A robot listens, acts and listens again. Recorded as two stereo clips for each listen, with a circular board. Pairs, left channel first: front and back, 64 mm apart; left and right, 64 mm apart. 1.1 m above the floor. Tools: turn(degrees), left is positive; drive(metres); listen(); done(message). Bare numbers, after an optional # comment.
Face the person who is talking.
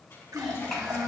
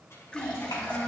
# The child speaking: 90° left.
turn(90)
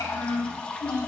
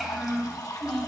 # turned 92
done("Facing the child speaking.")